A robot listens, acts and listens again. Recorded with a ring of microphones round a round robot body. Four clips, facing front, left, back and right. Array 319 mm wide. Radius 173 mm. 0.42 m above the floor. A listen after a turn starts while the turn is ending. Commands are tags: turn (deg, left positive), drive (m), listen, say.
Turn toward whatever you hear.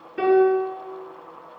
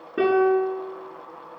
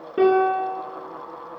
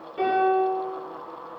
<turn deg="135"/>
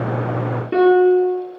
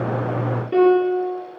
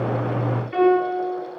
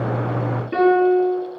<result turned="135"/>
<turn deg="10"/>
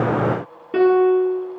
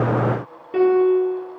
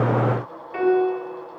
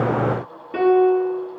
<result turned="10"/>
<say>Facing the piano.</say>